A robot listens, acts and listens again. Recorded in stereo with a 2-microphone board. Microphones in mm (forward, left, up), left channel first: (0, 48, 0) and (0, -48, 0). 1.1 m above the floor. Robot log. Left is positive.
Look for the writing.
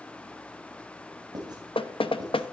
note: The writing: about 45° right or 135° right.
cmd yaw -45
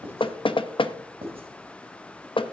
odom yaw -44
note: So it is at 90° right.
cmd yaw -90
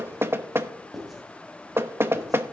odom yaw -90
end: Found it: writing, straight ahead, 2 to 4 m away.